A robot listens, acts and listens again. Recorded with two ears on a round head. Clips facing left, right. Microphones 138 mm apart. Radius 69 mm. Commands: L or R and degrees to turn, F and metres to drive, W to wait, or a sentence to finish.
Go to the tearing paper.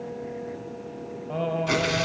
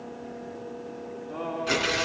L30
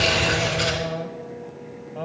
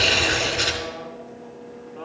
R25
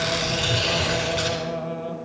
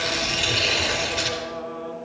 R10
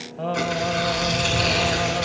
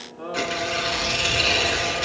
F1.0
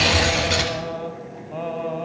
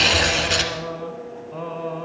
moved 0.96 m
F1.0
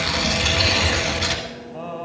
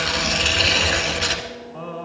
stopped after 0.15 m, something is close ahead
L10
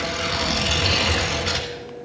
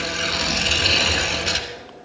I am next to the tearing paper.